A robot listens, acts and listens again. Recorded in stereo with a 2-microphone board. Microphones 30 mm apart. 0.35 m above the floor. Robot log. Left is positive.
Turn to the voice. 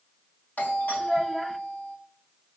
cmd yaw +30
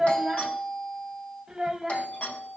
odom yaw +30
note: So it is at 25° right.
cmd yaw -25
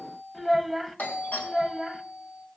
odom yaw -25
end: Found it: a child speaking, straight ahead.